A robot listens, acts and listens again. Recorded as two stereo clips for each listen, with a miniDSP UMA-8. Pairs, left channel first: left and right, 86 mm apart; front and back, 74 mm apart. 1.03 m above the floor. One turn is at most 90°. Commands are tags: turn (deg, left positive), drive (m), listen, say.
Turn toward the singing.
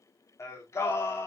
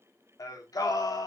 <turn deg="30"/>
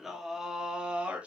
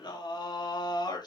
<turn deg="-15"/>
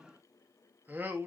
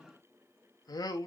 <turn deg="-25"/>
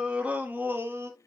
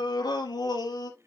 <turn deg="-30"/>
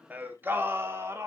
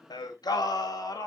<turn deg="-30"/>
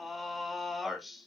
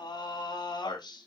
<say>Facing the singing, 2 to 4 m away.</say>